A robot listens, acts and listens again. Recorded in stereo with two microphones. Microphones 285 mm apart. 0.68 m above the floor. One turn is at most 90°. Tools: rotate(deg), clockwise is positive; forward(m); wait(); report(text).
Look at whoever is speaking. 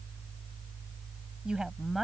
rotate(-30)
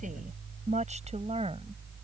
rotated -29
rotate(20)
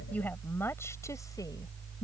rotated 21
rotate(-15)
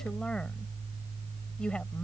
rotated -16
report("Facing the woman speaking.")